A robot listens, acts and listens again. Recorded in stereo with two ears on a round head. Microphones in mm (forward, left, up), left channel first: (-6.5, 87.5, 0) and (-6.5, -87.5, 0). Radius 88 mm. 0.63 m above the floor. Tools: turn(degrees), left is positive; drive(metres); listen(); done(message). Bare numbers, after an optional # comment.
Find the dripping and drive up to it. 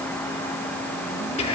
listen()
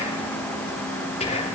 listen()
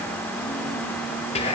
done("I can't make out dripping to turn to.")